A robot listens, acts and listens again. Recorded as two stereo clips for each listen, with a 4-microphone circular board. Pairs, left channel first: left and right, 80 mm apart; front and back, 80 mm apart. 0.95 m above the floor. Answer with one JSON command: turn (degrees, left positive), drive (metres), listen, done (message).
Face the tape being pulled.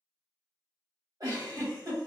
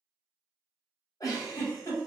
{"listen": true}
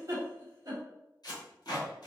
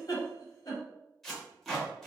{"turn": 85}
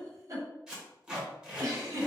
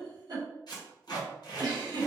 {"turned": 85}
{"turn": -10}
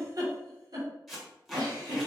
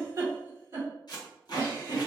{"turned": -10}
{"done": "Found it: tape being pulled, straight ahead."}